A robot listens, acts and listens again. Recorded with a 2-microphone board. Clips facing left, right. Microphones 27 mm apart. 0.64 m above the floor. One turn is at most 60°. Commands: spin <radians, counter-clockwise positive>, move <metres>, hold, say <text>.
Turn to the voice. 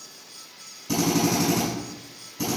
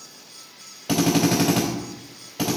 hold
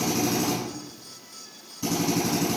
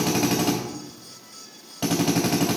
hold
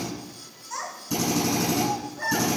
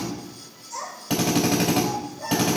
spin 1.05
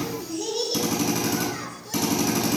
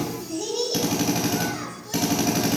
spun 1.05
spin 0.17
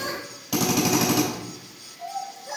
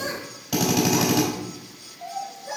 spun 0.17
say Found it: a child speaking, straight ahead.